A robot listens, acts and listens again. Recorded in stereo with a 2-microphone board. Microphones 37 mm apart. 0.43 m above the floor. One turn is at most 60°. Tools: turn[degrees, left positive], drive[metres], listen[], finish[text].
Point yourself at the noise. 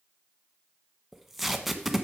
Action: turn[-30]
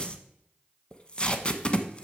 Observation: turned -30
Thought: So it is at 25° left.
Action: turn[25]
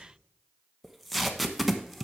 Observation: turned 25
Action: finish[Facing the tape being pulled.]